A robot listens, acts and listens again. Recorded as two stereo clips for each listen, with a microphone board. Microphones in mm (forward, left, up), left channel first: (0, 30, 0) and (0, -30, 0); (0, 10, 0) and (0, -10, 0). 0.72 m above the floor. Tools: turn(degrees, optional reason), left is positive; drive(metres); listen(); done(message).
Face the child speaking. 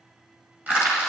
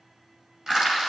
listen()
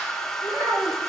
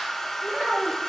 turn(degrees=-90)
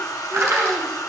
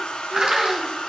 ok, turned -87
listen()
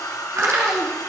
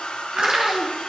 turn(degrees=-50, reason="The child speaking is now 50° right.")
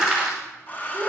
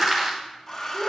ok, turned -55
turn(degrees=-10, reason="The child speaking is now 10° right.")
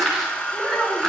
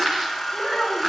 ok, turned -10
done("Facing the child speaking, 2 to 4 m away.")